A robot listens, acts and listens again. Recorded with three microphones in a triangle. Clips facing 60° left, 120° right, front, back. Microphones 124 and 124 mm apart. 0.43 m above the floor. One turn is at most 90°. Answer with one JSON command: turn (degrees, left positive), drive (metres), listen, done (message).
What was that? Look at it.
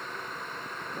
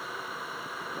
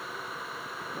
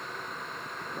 {"listen": true}
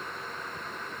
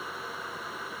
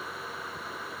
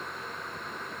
{"listen": true}
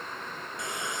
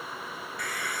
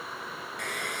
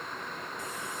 {"done": "Facing the hair dryer."}